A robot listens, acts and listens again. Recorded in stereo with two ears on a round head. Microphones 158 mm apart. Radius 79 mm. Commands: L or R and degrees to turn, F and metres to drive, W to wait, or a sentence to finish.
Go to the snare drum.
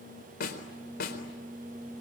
L55
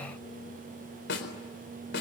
L65
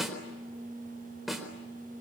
F1.0
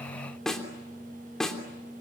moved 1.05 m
F1.0
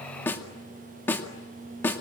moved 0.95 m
L10
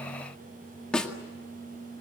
F1.0
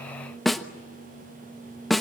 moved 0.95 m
F1.0
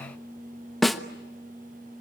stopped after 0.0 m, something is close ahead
Arrived at the snare drum, straight ahead.